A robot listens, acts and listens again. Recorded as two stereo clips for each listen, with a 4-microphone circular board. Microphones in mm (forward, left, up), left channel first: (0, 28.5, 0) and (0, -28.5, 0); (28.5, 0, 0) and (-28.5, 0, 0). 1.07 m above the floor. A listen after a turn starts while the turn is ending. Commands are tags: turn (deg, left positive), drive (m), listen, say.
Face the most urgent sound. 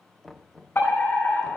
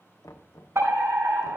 <turn deg="140"/>
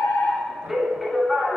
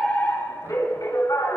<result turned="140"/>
<say>Found it: a fire alarm, straight ahead, over 4 m away.</say>